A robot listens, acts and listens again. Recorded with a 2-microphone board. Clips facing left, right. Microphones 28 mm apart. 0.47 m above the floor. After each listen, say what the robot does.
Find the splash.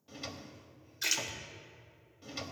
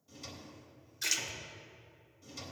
Turn 30° left.
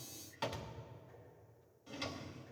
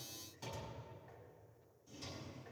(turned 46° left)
Keep listening.
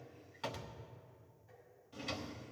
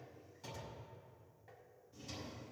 I heard a splash, but can't make it out now. It was about 35° right or 125° left.